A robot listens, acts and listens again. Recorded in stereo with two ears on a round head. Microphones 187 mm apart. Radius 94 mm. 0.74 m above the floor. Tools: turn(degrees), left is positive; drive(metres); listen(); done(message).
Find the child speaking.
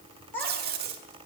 turn(degrees=30)
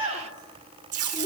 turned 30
turn(degrees=-20)
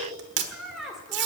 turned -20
done("Facing the child speaking, 1 to 2 m away.")